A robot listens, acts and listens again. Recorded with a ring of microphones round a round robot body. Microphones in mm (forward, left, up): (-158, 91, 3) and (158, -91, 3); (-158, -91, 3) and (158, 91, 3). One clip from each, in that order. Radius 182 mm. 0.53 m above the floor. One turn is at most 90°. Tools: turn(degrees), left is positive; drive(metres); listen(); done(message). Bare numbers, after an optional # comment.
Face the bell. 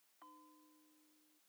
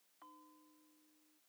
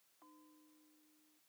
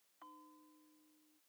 # The bell: 55° left.
turn(55)
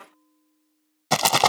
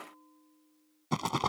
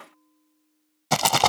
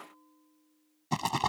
# The bell is now 15° right.
turn(-15)
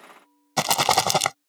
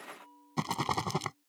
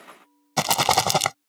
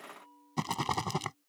done("Facing the bell.")